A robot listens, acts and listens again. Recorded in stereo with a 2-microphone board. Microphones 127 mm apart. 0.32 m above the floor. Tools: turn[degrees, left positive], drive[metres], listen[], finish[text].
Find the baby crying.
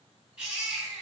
Action: turn[-30]
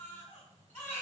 Thought: So it is at 20° left.
Action: turn[20]
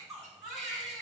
Action: finish[Facing the baby crying.]